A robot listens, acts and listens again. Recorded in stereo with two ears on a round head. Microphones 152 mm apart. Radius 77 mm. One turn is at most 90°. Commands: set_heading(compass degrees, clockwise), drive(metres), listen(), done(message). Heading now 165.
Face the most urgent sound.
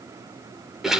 listen()
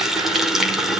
listen()
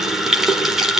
done("I can't make out anything urgent, only a running tap.")